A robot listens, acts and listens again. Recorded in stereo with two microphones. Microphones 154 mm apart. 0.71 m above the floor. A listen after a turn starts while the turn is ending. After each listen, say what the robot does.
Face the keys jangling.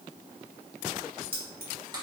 Turn 90° right.
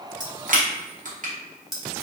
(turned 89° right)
Found it: keys jangling, straight ahead.